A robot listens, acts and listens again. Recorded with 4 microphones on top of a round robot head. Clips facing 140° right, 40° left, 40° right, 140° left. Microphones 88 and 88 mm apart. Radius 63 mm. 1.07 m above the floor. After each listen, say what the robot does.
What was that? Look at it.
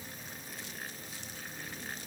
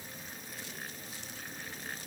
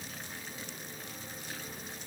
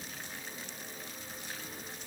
Keep listening.
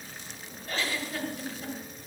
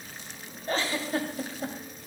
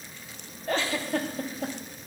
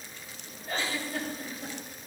Turn 20° right.
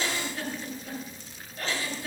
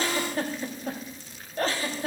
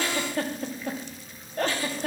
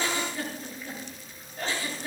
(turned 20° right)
Turn 10° right.
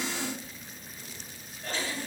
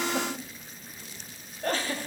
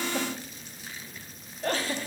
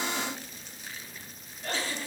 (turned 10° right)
Found it: a giggle, straight ahead, 2 to 4 m away.